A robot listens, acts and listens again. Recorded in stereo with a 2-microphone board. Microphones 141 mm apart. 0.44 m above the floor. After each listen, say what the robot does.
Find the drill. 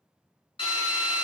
Turn 40° left.
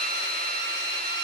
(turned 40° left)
Found it: a drill, straight ahead, under 1 m away.